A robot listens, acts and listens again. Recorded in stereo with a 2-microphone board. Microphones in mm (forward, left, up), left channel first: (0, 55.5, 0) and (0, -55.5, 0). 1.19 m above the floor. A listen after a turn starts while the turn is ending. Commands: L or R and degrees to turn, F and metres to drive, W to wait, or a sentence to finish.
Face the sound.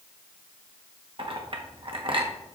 R50
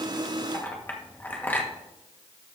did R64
L15
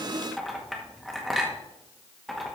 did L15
Facing the clink.